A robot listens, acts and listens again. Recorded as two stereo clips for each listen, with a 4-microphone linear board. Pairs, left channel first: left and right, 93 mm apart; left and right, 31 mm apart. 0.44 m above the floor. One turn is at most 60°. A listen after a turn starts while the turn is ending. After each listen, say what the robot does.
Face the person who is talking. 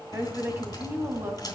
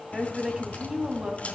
Turn 30° right.
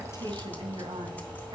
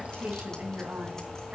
Keep listening.
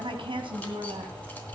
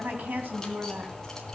Turn 60° right.
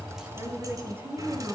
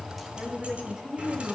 Turn 25° right.
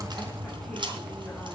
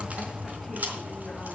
Keep listening.
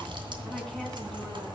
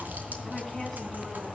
Keep listening.
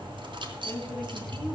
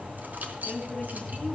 I heard a woman speaking from this way, but can't make it out now.